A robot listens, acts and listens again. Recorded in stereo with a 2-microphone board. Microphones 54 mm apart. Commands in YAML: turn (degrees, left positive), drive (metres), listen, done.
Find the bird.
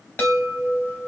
listen: true
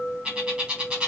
turn: -15
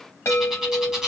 done: "Found it: a bird, straight ahead, 1 to 2 m away."